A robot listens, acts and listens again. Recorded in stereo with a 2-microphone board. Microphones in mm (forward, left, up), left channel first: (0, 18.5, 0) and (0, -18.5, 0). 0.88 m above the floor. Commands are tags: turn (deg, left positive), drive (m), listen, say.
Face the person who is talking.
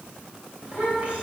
<turn deg="-30"/>
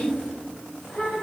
<say>Facing the child speaking, 2 to 4 m away.</say>